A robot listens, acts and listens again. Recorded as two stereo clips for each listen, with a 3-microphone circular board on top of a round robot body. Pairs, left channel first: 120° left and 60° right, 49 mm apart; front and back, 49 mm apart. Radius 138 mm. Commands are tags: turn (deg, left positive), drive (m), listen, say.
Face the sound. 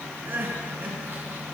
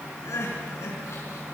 <turn deg="-15"/>
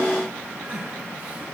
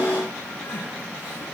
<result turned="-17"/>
<say>Facing the crying, over 4 m away.</say>